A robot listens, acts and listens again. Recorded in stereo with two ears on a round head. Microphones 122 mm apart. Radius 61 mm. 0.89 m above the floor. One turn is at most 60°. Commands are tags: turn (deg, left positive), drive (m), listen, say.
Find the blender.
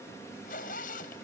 <listen/>
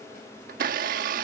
<turn deg="-60"/>
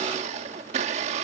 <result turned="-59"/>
<turn deg="-50"/>
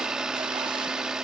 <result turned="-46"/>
<say>Facing the blender.</say>